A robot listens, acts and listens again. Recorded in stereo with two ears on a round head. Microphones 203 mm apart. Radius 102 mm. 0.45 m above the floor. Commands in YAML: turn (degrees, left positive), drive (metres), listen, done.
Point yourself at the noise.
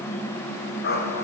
turn: 45
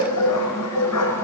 turn: 85
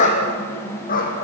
turn: 40
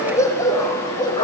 turn: 20
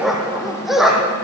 done: "Facing the dog barking, over 4 m away."